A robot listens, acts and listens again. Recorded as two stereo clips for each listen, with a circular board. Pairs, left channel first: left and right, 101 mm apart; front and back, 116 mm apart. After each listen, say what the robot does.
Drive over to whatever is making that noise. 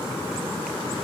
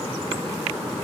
Keep listening.
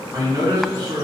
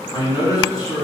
Turn 50° right.
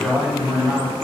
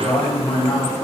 Turn 15° right.
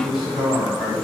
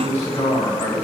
Drive 1.0 m forward.
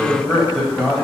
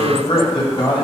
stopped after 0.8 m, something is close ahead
I am next to the man speaking.